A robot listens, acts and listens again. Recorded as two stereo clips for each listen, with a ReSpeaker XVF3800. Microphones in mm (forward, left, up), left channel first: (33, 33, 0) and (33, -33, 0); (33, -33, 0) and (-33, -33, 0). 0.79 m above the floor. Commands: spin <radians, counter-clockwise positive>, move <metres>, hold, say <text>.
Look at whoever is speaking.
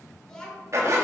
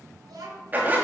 spin 2.97
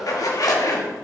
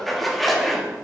hold
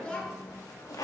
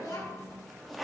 spin 0.26
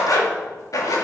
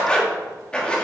hold
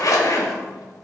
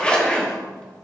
hold
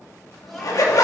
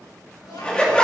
say Facing the child speaking.